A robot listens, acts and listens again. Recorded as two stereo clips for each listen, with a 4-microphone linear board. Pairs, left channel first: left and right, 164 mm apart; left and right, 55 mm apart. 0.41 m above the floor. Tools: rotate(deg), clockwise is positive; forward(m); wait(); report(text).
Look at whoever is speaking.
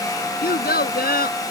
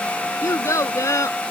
rotate(-75)
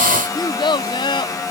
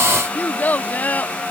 rotate(-30)
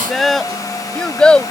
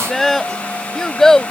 rotate(-10)
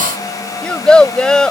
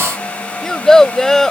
report("Found it: a child speaking, straight ahead.")